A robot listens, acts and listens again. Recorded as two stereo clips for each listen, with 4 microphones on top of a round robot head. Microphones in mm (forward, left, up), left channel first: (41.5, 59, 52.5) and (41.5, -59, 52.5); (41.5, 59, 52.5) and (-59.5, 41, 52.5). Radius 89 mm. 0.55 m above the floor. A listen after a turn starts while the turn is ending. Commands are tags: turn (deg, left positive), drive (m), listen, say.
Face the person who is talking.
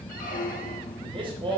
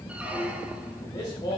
<turn deg="-45"/>
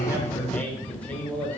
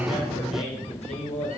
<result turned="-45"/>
<turn deg="10"/>
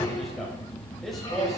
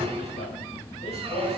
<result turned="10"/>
<say>Facing the man speaking.</say>